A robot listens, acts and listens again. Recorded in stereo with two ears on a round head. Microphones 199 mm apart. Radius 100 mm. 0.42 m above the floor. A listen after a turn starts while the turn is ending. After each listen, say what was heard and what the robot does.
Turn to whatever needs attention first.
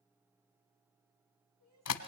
Turn 90° right.
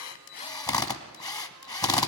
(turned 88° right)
Keep listening.
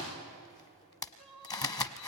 Found it: crying, straight ahead, over 4 m away.